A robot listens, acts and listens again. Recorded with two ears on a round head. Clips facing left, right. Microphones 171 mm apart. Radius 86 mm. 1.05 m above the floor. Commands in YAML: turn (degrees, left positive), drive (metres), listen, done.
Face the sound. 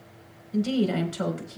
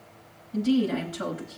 turn: 70
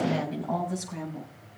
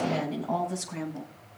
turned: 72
done: "Facing the woman speaking."